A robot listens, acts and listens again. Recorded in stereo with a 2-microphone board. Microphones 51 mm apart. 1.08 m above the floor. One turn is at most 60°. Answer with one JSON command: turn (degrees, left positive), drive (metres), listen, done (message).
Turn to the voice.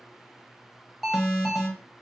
{"listen": true}
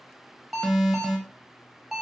{"listen": true}
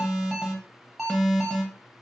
{"done": "I can't make out anyone speaking, only an alarm."}